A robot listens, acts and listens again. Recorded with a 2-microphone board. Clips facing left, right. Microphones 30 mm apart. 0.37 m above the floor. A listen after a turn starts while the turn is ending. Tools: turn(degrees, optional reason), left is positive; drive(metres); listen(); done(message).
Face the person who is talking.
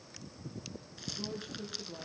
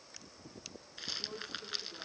turn(degrees=90)
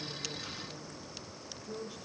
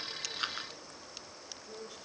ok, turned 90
done("Facing the woman speaking, over 4 m away.")